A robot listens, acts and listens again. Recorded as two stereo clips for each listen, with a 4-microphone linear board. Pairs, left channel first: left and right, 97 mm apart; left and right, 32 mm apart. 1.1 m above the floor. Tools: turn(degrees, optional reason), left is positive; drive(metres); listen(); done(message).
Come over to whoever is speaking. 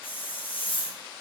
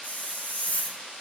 listen()
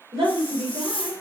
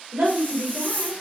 turn(degrees=-90)
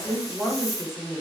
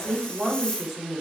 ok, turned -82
drive(metres=1.0)
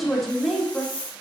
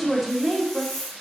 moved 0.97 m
drive(metres=1.0)
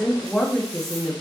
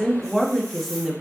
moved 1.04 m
drive(metres=1.0)
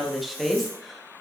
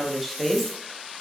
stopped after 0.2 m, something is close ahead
done("I am next to the woman speaking.")